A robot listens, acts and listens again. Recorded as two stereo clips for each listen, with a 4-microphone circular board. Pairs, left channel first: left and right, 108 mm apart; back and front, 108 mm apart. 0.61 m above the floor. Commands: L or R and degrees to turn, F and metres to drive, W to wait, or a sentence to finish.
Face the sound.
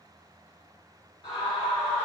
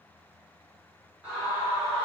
L70
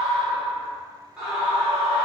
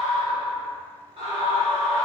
R15
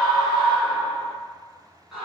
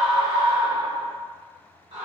Found it: a scream, straight ahead, 1 to 2 m away.